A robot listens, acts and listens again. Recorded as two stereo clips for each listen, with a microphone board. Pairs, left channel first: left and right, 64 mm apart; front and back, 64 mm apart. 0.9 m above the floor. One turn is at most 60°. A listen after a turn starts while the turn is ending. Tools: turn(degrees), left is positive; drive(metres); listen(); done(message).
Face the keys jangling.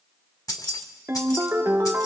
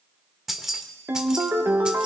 turn(degrees=60)
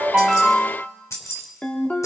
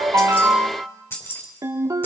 turn(degrees=50)
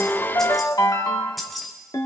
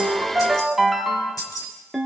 done("Facing the keys jangling, 2 to 4 m away.")